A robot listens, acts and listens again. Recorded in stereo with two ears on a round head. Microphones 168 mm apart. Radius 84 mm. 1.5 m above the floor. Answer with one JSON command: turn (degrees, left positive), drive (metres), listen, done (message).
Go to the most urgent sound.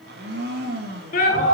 {"turn": 45}
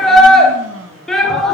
{"drive": 1.0}
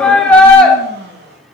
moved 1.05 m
{"drive": 1.0}
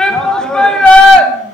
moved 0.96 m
{"drive": 1.0}
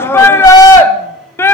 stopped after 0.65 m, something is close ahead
{"turn": 15}
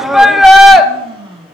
{"done": "I am next to the shout."}